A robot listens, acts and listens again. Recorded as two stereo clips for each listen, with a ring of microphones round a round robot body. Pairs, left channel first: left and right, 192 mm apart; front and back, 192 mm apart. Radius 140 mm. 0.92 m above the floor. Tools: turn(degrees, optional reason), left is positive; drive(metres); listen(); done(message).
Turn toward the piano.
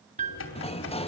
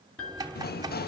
turn(degrees=-40, reason="The piano: 40° right.")
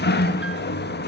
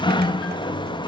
listen()
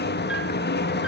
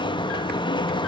listen()
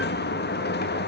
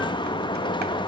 done("I heard a piano from this way, but can't make it out now.")